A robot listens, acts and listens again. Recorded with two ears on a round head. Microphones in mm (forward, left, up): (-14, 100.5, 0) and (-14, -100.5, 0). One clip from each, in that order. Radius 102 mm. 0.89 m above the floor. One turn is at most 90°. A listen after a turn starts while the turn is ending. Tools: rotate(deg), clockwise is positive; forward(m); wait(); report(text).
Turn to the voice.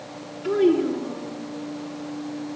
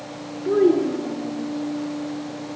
rotate(-90)
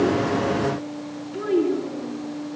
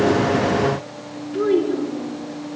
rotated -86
report("Found it: a child speaking, straight ahead, over 4 m away.")